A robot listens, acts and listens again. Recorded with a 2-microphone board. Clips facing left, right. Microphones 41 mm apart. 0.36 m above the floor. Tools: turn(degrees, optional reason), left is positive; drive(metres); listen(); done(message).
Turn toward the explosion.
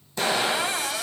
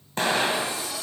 turn(degrees=-50, reason="The explosion: about 50° right or 130° right.")
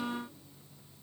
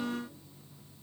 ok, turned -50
listen()
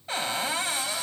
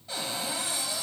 done("I heard an explosion, but can't make it out now. It was about straight ahead or 80° right.")